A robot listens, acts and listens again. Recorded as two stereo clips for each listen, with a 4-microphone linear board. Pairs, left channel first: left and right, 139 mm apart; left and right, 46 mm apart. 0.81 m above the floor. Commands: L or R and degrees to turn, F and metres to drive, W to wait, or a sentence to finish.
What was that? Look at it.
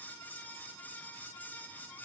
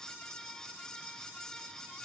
W
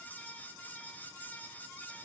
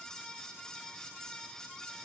W
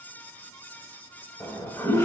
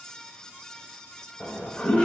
L15
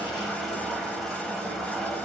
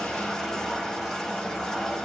Found it: a toilet flushing, straight ahead.